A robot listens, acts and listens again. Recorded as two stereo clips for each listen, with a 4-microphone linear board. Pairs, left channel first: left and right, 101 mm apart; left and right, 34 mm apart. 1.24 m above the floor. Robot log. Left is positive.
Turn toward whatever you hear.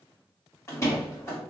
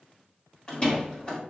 note: The door slam: about 30° left or 150° left.
cmd yaw +30
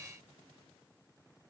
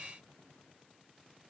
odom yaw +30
cmd idle
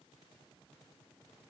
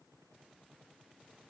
end: I heard a door slam, but can't make it out now. It was about straight ahead or 120° left.